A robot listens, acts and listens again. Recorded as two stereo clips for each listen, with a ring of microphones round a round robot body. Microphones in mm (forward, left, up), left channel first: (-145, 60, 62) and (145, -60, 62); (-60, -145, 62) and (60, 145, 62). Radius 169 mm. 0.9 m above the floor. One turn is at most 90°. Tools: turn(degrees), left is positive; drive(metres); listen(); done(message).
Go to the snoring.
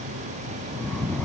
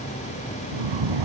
turn(degrees=70)
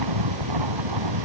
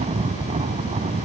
drive(metres=1.0)
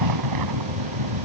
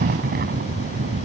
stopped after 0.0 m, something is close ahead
done("Blocked. The snoring is further on, straight ahead.")